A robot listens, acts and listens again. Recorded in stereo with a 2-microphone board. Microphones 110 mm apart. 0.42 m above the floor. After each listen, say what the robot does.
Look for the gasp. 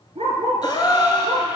Turn 45° left.
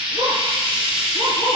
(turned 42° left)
Keep listening.
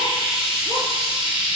I heard a gasp, but can't make it out now. It was about straight ahead or 95° left.